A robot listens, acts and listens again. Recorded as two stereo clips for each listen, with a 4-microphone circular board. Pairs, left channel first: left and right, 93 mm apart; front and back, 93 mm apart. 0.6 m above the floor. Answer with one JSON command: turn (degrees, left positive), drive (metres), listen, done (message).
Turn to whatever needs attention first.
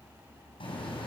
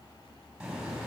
{"listen": true}
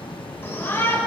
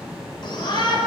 {"turn": 30}
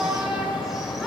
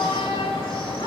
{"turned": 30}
{"done": "Found it: a shout, straight ahead, 2 to 4 m away."}